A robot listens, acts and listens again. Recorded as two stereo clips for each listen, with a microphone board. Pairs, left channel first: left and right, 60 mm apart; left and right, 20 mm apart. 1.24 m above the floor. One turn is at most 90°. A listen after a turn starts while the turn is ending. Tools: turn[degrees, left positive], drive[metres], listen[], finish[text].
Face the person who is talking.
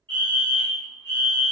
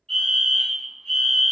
Action: listen[]
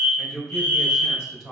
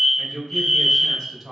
Action: turn[30]
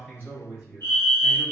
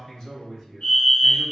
Thought: So it is at 140° left.
Action: turn[90]
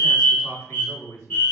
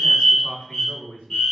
Thought: The man speaking is now 60° left.
Action: turn[60]
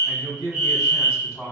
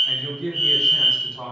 Thought: The man speaking is now 10° left.
Action: turn[10]
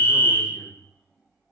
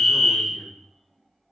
Action: listen[]
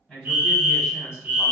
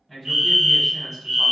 Action: finish[Found it: a man speaking, straight ahead, 2 to 4 m away.]